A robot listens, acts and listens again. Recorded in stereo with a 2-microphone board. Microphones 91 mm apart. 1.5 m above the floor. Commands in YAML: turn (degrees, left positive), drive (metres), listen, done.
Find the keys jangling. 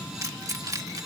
turn: -40
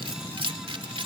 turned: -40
turn: -100
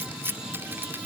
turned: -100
turn: -25
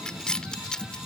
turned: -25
turn: 10
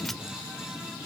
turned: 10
listen: true
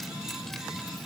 listen: true
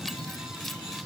done: "I heard keys jangling from this way, but can't make it out now."